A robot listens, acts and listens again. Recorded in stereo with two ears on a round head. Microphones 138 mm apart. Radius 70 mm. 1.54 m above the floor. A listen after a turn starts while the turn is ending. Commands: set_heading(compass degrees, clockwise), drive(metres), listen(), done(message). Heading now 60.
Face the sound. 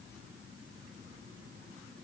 listen()
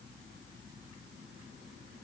listen()
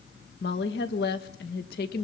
set_heading(345)
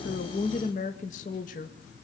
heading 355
set_heading(295)
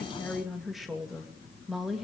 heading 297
done("Found it: a woman speaking, straight ahead.")